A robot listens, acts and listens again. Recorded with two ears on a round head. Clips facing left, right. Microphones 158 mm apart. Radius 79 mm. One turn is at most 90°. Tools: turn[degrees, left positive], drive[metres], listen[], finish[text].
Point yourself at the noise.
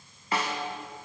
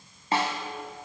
Thought: The snare drum: about 25° right or 155° right.
Action: turn[-25]
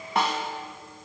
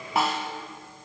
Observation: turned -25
Action: finish[Found it: a snare drum, straight ahead.]